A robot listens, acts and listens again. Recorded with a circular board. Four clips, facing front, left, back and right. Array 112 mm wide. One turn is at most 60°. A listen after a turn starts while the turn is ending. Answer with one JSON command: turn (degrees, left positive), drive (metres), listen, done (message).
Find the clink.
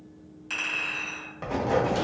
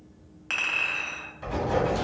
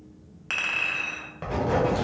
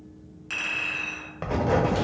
{"turn": 60}
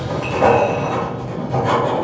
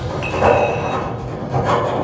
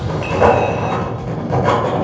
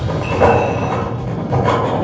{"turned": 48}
{"turn": 60}
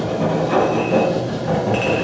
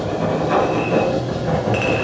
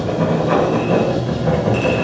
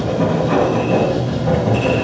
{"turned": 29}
{"turn": 60}
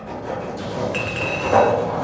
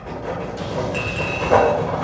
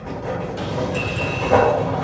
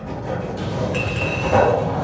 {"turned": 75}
{"done": "Facing where the clink came from. I can't hear it now."}